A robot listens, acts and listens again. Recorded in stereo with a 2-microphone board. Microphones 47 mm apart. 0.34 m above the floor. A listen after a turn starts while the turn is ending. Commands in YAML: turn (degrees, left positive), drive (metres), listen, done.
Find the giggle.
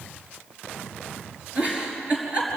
turn: -25
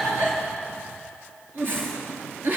turn: -130
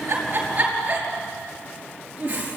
turn: -30
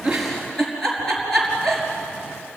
turn: 10
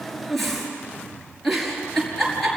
done: "Facing the giggle."